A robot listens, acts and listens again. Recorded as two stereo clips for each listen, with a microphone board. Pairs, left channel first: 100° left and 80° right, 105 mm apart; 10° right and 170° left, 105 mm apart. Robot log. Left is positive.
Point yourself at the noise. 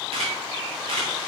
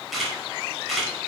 note: The camera shutter: 100° right.
cmd yaw -100
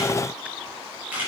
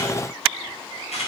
end: Found it: a camera shutter, straight ahead, over 4 m away.